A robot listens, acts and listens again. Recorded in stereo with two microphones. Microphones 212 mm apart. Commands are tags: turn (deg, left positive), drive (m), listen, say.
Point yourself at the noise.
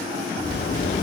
<turn deg="45"/>
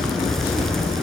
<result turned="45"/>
<say>Facing the zipper.</say>